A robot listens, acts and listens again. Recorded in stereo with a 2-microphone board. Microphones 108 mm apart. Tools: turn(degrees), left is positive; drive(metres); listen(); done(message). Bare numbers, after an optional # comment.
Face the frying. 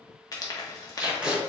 # The frying: about 35° left or 145° left.
turn(35)
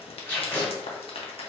# So it is at 105° left.
turn(105)
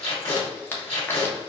# The frying is now 20° left.
turn(20)
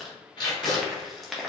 done("Found it: frying, straight ahead.")